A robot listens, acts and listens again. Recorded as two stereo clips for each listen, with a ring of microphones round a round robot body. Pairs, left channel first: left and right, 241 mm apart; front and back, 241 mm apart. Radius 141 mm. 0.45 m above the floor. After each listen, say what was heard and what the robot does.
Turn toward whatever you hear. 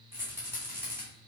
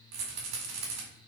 The rattle: 170° right. Turn 170° right.
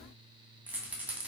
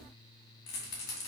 Facing the rattle.